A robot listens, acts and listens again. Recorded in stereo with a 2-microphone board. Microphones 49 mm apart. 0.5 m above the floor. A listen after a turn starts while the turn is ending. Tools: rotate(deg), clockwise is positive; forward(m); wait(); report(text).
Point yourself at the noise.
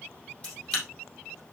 rotate(-20)
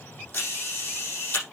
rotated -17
rotate(-140)
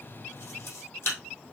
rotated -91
rotate(-50)
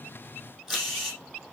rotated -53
report("Facing the camera shutter, over 4 m away.")